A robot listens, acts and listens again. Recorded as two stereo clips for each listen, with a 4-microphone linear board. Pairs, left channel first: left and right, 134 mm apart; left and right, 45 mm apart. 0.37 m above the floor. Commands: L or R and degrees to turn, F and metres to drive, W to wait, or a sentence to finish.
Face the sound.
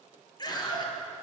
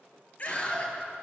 L35
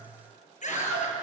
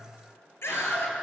L110
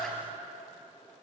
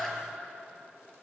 Found it: a scream, straight ahead.